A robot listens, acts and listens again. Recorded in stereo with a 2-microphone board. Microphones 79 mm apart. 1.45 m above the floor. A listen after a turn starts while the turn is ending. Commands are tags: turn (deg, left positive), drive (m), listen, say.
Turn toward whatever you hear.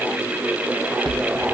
<turn deg="-90"/>
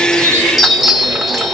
<say>Facing the chime.</say>